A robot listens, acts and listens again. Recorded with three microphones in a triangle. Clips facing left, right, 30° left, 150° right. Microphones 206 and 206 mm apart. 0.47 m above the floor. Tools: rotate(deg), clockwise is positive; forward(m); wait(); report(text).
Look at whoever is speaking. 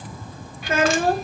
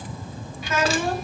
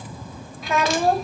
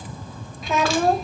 rotate(-120)
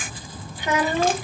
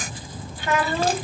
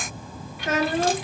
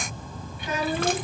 rotate(-20)
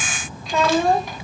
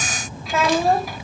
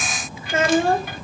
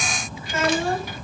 report("Found it: a child speaking, straight ahead.")